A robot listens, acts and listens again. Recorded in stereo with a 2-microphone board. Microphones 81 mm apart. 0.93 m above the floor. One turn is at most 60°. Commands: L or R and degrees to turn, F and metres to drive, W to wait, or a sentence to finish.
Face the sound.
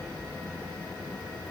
W
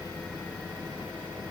W
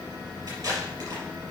R45
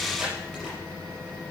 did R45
W
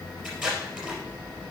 Facing the tape being pulled.